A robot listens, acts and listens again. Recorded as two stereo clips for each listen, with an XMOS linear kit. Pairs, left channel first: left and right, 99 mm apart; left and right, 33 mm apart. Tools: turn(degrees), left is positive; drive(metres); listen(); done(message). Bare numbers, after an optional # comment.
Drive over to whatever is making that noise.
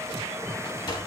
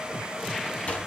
# The sliding door: about 50° left or 130° left.
turn(50)
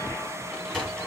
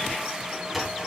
drive(1.0)
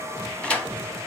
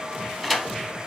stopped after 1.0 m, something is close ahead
# The sliding door is now 10° left.
turn(10)
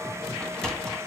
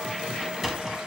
done("Arrived at the sliding door, straight ahead.")